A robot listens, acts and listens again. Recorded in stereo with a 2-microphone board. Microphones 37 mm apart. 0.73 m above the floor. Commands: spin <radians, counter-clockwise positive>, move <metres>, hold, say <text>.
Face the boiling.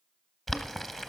spin 0.52
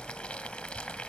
spin 2.62
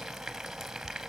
spin -0.17
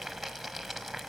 say Found it: boiling, straight ahead.